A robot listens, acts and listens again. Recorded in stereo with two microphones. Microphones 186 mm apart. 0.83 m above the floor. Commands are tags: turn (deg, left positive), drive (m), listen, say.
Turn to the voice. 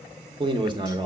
<turn deg="-30"/>
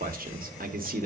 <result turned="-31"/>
<turn deg="-125"/>
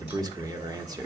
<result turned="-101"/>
<turn deg="-20"/>
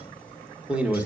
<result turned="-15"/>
<say>Found it: a man speaking, straight ahead, 1 to 2 m away.</say>